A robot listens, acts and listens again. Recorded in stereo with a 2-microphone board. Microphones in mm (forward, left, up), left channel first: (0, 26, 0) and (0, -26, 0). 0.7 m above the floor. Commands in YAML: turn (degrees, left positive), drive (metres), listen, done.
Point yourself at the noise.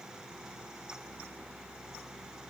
listen: true
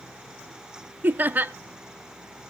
turn: -35
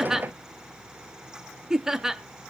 turn: -10
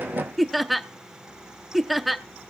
done: "Facing the laughter."